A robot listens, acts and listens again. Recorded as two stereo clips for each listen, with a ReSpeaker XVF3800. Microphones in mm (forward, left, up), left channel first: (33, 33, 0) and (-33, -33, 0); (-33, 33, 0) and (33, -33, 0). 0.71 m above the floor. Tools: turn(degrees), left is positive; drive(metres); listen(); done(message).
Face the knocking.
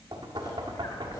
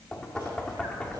turn(degrees=-145)
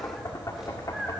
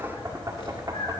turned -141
done("Facing the knocking.")